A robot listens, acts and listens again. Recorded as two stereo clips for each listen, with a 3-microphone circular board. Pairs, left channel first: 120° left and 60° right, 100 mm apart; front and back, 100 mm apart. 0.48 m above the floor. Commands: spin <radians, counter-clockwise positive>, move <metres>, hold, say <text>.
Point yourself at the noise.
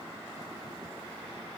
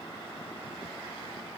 hold
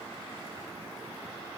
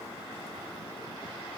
hold
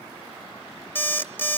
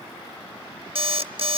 spin -3.05
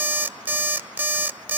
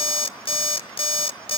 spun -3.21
spin 0.17
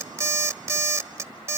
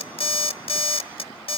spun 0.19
say Facing the alarm clock.